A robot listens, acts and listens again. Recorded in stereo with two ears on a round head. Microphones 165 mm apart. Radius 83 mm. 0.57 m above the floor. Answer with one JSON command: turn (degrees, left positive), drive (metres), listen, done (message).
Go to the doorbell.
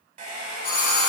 {"turn": 50}
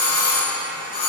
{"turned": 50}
{"turn": 70}
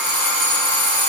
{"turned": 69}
{"drive": 1.0}
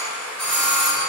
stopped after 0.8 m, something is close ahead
{"done": "I am next to the doorbell."}